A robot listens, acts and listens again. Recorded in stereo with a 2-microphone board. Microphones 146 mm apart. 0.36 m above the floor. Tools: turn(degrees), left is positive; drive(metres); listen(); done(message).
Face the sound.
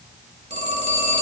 turn(degrees=-50)
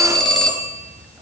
done("Facing the phone ringing.")